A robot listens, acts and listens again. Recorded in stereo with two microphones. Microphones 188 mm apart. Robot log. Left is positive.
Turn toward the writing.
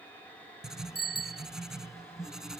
cmd yaw -30
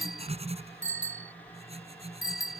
note: So it is at 150° right.
cmd yaw -150
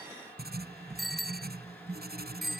note: The writing is now 55° right.
cmd yaw -55
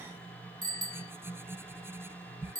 note: The writing is now 10° right.
cmd yaw -10
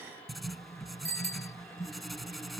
end: Found it: writing, straight ahead.